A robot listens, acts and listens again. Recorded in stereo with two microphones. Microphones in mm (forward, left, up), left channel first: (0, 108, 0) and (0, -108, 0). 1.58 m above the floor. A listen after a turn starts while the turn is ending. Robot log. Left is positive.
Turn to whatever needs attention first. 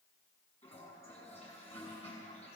cmd idle
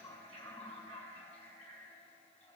cmd idle
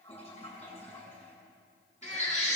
note: The baby crying: about 35° left or 145° left.
cmd yaw +35
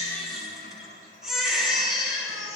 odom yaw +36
end: Found it: a baby crying, straight ahead.